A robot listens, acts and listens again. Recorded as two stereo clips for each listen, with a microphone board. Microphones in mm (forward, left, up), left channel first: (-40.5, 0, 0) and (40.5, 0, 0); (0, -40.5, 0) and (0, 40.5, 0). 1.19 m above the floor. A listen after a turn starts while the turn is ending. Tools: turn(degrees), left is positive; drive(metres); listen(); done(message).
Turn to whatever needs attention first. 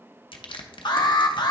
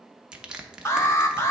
turn(degrees=-150)
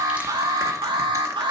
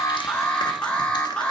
turn(degrees=-15)
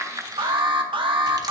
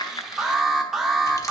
done("Found it: an alarm, straight ahead.")